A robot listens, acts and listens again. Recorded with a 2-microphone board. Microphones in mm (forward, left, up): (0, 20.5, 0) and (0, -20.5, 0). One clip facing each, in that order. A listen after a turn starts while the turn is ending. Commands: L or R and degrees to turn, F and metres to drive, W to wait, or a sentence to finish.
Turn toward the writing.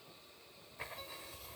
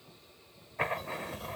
R65
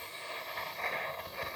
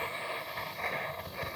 Found it: writing, straight ahead.